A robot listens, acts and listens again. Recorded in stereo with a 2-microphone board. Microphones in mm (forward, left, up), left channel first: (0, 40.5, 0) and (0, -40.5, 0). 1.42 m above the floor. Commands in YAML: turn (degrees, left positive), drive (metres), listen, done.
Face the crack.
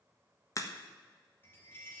turn: 40
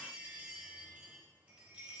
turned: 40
listen: true
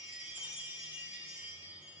done: "I heard a crack, but can't make it out now. It was about straight ahead or 100° left."